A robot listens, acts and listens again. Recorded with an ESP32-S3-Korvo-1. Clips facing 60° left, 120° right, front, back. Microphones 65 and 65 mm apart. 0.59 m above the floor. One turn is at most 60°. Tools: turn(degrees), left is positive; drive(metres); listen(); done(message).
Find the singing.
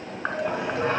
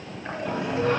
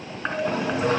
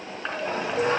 turn(degrees=60)
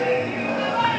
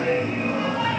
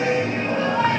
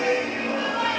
turn(degrees=55)
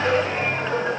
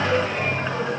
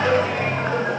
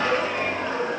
done("Found it: singing, straight ahead, 2 to 4 m away.")